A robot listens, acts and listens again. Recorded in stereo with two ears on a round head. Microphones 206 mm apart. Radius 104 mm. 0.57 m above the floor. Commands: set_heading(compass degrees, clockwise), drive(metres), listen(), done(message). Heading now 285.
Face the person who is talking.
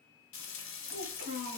set_heading(320)
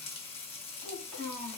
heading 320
done("Found it: a child speaking, straight ahead, 1 to 2 m away.")